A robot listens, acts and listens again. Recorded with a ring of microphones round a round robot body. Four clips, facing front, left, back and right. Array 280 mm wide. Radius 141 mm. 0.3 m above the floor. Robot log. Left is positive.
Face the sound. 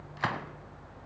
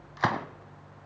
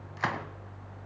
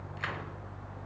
note: The gunshot: 95° left.
cmd yaw +95
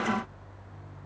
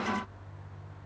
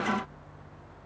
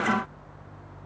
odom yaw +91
end: I heard a gunshot from this way, but can't make it out now.